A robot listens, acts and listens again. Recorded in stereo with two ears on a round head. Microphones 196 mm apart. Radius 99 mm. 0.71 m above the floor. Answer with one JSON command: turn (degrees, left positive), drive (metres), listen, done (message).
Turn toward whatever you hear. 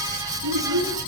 {"turn": -90}
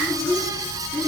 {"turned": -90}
{"done": "Found it: a child speaking, straight ahead."}